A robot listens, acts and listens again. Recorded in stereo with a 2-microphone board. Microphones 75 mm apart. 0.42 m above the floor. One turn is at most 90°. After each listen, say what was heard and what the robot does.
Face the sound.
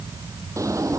The drawer: about 45° right or 135° right. Turn 45° right.
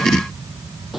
Keep listening.
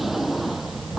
Found it: a drawer, straight ahead.